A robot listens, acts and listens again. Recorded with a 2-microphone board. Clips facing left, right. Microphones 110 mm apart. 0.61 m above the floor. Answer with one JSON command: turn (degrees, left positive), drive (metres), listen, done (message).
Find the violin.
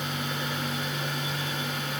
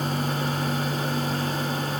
{"listen": true}
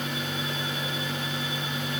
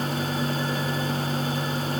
{"listen": true}
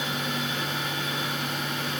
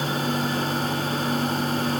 {"done": "I can't make out a violin to turn to."}